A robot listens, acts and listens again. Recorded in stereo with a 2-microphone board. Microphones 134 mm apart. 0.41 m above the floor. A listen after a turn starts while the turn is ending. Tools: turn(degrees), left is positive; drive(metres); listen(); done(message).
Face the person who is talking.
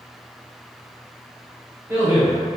turn(degrees=-15)
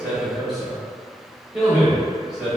done("Found it: a man speaking, straight ahead.")